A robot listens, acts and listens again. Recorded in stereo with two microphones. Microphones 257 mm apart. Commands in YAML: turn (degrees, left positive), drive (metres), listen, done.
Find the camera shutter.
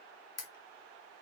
turn: 70
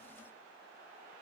listen: true
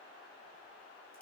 listen: true
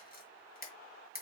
turn: 35
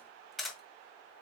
done: "Found it: a camera shutter, straight ahead, 1 to 2 m away."